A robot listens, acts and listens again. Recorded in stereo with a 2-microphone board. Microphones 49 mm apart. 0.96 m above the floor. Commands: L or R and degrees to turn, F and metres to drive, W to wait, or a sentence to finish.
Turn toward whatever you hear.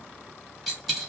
L30
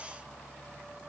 W
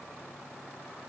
I heard a dropped coin, but can't make it out now. It was about 30° right or 150° left.